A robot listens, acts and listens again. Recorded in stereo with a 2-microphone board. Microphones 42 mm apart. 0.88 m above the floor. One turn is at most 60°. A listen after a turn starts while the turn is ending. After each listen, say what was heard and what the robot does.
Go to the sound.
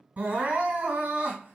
The crying: about 35° right or 145° right. Turn 35° right.
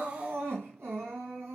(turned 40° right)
So it is at 105° right. Turn 60° right.
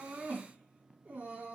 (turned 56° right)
The crying is now 50° right. Turn 50° right.
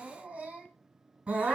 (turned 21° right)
The crying is now 30° right. Turn 30° right.
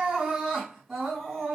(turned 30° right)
Drive 1.0 m forward.
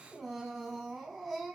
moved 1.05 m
Drive 1.0 m forward.
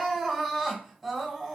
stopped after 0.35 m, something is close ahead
Arrived at the crying, straight ahead.